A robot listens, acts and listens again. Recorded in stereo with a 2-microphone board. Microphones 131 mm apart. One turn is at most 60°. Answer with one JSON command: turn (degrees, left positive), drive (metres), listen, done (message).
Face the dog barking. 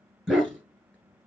{"turn": 30}
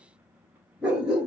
{"turn": -30}
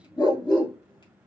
{"turn": 35}
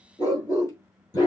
{"turn": 30}
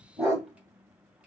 {"done": "Found it: a dog barking, straight ahead."}